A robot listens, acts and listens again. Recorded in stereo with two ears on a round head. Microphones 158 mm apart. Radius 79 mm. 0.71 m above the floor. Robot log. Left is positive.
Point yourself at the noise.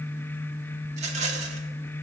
note: The rattle: about 40° right or 140° right.
cmd yaw -40
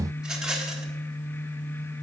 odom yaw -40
end: Found it: a rattle, straight ahead, 1 to 2 m away.